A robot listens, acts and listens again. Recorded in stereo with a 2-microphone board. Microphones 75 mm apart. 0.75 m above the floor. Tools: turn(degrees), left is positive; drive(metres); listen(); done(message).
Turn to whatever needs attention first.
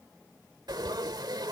listen()
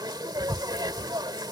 listen()
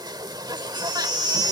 turn(degrees=-70)
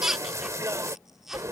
done("Found it: a baby crying, straight ahead.")